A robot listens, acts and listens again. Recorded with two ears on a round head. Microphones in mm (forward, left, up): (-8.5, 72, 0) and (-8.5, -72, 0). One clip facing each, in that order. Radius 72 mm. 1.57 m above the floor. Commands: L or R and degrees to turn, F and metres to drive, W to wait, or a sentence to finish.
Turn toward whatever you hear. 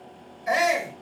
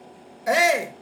R60
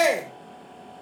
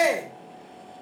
Facing the shout, 2 to 4 m away.